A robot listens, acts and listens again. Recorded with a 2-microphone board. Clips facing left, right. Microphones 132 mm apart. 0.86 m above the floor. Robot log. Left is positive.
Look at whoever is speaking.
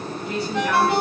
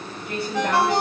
note: The woman speaking: about 55° right or 125° right.
cmd yaw -55
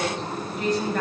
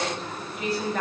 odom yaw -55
end: Facing the woman speaking.